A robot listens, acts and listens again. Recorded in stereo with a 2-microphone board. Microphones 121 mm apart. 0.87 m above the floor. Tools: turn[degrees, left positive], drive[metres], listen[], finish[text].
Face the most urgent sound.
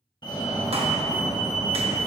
Thought: The fire alarm: about 40° left or 140° left.
Action: turn[40]
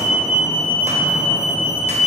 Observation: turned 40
Thought: So it is at 90° left.
Action: turn[90]
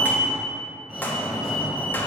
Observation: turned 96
Action: finish[Found it: a fire alarm, straight ahead, 2 to 4 m away.]